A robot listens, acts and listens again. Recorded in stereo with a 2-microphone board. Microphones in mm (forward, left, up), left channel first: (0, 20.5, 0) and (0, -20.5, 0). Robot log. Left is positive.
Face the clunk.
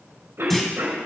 cmd yaw +30
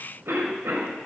cmd idle
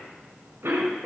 end: I heard a clunk, but can't make it out now. It was about 25° right or 145° left.